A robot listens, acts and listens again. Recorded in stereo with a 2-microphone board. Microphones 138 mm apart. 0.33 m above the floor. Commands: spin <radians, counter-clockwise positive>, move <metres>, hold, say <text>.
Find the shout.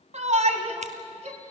spin -1.13
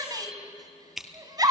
spin -0.61
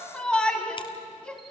spin 0.17
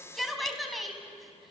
say Found it: a shout, straight ahead.